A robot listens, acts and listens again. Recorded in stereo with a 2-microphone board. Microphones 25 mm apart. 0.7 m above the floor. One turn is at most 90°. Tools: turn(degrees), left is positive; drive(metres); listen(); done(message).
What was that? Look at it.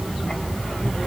listen()
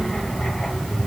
listen()
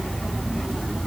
done("I can't make out anything to turn to.")